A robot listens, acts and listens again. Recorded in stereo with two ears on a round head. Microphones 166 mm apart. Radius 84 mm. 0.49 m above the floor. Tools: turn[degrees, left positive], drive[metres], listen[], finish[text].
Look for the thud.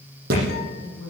Thought: The thud: about 55° right or 125° right.
Action: turn[-55]
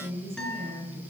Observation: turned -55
Action: listen[]
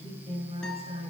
Action: finish[I heard a thud, but can't make it out now. It was about straight ahead or 70° right.]